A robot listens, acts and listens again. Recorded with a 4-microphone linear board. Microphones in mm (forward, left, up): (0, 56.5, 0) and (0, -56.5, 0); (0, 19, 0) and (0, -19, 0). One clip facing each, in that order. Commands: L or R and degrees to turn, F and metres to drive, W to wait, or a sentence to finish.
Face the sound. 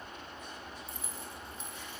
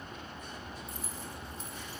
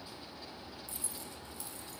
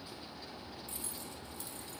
R40
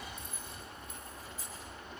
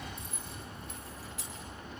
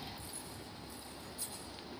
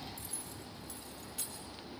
R100
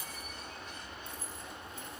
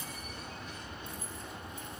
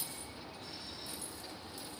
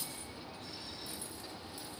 W
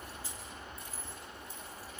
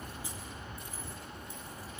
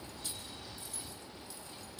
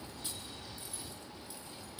R15
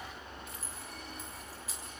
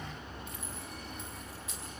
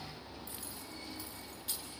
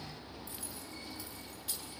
Facing the keys jangling, over 4 m away.